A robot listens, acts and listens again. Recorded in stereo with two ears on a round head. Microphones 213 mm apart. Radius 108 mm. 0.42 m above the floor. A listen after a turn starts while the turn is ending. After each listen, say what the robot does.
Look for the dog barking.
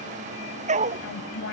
Turn 30° right.
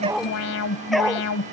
Found it: a dog barking, straight ahead.